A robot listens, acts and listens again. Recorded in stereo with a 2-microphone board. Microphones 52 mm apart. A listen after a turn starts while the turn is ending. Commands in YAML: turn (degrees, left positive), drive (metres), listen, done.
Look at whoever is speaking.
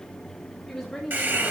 turn: 30
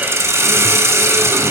listen: true
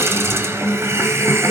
listen: true
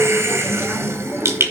done: "I heard a woman speaking, but can't make it out now. It was about 25° right or 145° left."